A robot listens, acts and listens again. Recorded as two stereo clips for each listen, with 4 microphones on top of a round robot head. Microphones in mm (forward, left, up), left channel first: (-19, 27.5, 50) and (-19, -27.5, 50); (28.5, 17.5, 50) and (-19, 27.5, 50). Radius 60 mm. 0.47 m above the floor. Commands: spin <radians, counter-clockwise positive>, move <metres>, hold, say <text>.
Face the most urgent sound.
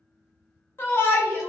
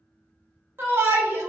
spin 2.36
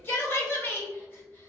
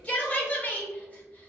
spin 0.79
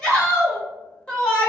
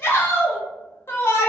spin 0.35
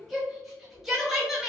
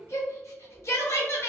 say Facing the shout, 1 to 2 m away.